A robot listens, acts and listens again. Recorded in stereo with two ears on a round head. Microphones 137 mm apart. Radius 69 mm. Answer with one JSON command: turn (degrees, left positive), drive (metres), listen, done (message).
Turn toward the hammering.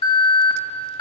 {"listen": true}
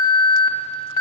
{"listen": true}
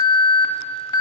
{"done": "I can't make out hammering to turn to."}